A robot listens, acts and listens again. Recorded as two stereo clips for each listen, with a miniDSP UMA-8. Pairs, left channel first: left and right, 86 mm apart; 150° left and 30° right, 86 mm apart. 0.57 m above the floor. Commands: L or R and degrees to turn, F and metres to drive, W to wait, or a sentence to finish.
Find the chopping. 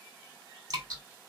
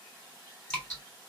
W
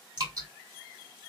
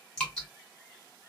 W
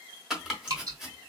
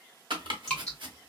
Found it: chopping, straight ahead.